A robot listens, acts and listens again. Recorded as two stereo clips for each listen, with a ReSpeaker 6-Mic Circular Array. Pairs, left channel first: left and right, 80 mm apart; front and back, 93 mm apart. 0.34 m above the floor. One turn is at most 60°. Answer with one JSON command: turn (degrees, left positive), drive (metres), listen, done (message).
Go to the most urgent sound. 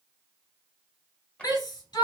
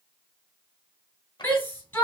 {"turn": 60}
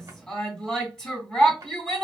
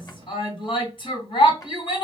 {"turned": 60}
{"turn": 10}
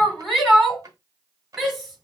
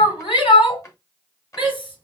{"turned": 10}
{"drive": 1.0}
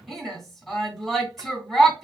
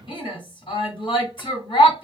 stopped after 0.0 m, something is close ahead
{"done": "Something is in my way. I am facing the shout but have not reached it."}